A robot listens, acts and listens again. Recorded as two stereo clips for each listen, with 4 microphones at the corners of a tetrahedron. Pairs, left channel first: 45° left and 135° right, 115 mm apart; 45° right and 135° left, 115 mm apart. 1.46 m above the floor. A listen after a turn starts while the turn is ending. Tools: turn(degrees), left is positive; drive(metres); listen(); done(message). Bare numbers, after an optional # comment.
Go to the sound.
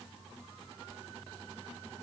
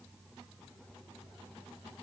listen()
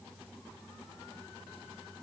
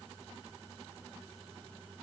listen()
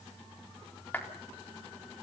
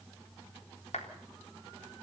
# The clap: 30° right.
turn(-30)
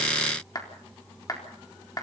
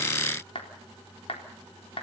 # The clap is now 10° right.
turn(-10)
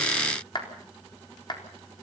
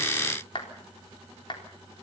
drive(1.0)
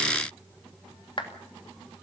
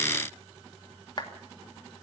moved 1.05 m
drive(1.0)
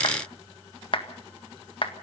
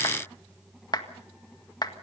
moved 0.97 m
drive(1.0)
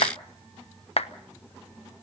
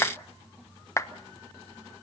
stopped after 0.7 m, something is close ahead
# The clap is now 20° left.
turn(20)
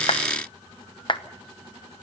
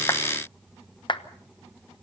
done("I am next to the clap.")